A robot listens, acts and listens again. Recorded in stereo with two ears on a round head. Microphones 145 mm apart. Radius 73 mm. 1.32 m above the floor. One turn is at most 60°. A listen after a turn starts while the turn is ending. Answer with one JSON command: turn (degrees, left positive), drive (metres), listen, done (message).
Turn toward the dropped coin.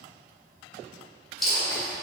{"turn": 30}
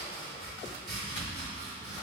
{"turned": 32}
{"listen": true}
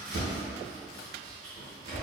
{"done": "I heard a dropped coin, but can't make it out now. It was about 30° right or 145° left."}